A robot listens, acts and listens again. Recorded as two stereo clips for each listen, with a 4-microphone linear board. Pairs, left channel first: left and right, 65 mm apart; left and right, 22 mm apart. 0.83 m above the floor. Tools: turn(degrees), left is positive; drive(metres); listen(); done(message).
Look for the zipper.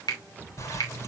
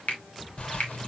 turn(degrees=55)
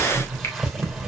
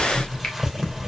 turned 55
done("Facing the zipper, 2 to 4 m away.")